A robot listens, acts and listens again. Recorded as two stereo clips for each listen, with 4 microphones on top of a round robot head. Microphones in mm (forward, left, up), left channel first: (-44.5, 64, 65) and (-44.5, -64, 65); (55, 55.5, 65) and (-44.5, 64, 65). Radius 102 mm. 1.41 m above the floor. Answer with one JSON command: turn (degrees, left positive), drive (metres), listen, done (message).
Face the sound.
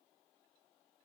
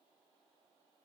{"listen": true}
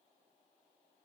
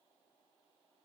{"listen": true}
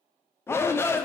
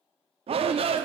{"turn": 160}
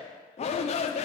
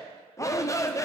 {"turn": 55}
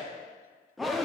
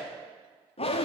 {"done": "Facing the shout."}